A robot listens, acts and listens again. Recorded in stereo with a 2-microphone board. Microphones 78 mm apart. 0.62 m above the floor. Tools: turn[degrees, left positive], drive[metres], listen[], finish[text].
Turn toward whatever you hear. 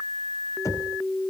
Thought: The knocking: about 45° left or 135° left.
Action: turn[45]
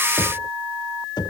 Thought: So it is at 85° left.
Action: turn[85]
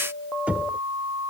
Thought: The knocking is now 20° right.
Action: turn[-20]
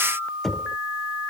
Action: finish[Found it: knocking, straight ahead.]